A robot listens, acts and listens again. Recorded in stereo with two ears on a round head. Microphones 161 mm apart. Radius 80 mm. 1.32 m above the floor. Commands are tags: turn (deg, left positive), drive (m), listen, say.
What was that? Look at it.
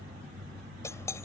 <turn deg="15"/>
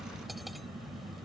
<listen/>
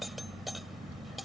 <say>Found it: cutlery clinking, straight ahead.</say>